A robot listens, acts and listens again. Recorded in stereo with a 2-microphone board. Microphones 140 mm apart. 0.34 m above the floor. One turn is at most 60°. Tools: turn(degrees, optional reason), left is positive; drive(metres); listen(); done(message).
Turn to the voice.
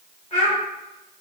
turn(degrees=55, reason="The child speaking: about 55° left or 125° left.")
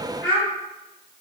done("Found it: a child speaking, straight ahead, 1 to 2 m away.")